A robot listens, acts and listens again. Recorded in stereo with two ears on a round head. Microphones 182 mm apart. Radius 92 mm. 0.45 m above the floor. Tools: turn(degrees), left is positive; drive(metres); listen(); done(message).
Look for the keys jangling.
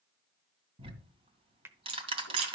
turn(degrees=-90)
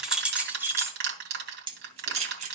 turn(degrees=-35)
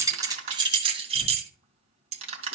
turn(degrees=-35)
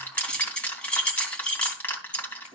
done("Facing the keys jangling, 2 to 4 m away.")